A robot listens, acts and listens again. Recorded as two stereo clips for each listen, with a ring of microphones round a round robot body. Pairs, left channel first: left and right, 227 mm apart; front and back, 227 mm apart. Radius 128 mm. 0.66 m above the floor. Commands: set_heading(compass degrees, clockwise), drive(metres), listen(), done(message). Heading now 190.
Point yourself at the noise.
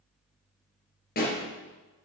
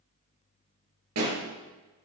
set_heading(45)
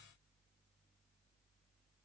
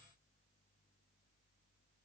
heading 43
done("Facing where the pop came from. I can't hear it now.")